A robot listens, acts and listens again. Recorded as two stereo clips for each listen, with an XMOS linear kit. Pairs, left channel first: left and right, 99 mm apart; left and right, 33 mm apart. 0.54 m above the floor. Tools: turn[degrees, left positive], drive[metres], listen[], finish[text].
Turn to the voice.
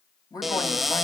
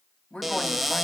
Thought: The woman speaking: about 40° left or 140° left.
Action: turn[40]
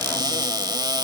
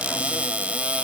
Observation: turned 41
Action: listen[]
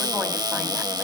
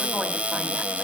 Action: listen[]
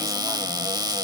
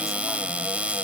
Action: finish[I heard a woman speaking, but can't make it out now. It was about straight ahead or 95° left.]